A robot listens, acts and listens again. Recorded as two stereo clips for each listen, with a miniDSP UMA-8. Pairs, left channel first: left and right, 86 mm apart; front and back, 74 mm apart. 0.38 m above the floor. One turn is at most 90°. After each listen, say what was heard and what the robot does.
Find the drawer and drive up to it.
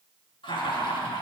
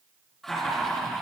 Keep listening.
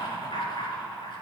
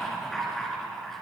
Keep listening.
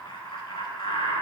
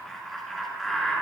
I can't make out a drawer, only laughter.